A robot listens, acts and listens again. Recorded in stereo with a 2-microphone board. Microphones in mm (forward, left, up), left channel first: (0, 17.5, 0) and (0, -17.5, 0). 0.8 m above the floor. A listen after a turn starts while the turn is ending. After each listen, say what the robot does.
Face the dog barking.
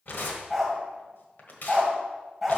Turn 30° left.
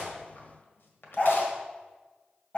Turn 140° left.
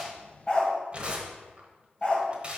Turn 25° left.
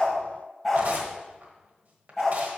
Facing the dog barking, 1 to 2 m away.